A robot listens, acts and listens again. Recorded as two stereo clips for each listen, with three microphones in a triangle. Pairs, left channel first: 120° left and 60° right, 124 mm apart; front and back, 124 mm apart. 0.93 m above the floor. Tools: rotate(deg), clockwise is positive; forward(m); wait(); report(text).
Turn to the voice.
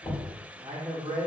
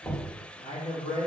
rotate(-10)
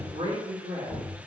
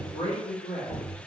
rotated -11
report("Found it: a man speaking, straight ahead.")